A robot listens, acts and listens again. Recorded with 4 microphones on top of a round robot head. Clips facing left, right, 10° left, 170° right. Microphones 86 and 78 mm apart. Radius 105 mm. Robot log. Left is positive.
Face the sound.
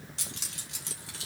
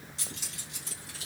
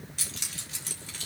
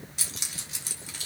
note: The keys jangling: 105° left.
cmd yaw +105
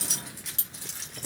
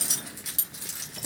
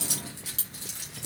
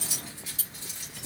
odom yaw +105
note: The keys jangling is now 10° right.
cmd yaw -10
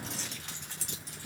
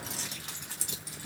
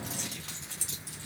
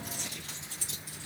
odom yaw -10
note: The keys jangling is now 10° right.
cmd yaw -10
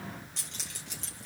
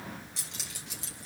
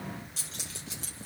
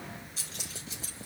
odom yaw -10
note: The keys jangling is now 10° right.
cmd yaw -10
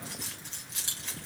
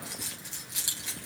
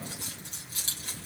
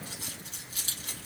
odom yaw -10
end: Facing the keys jangling.